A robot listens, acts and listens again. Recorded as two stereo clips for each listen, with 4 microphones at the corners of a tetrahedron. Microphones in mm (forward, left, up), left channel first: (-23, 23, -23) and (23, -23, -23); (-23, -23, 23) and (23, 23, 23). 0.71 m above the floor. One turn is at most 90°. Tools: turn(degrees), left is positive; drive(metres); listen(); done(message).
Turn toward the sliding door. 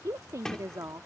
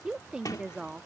turn(degrees=-90)
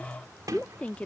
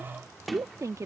turn(degrees=-45)
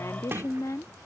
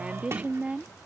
done("Facing the sliding door.")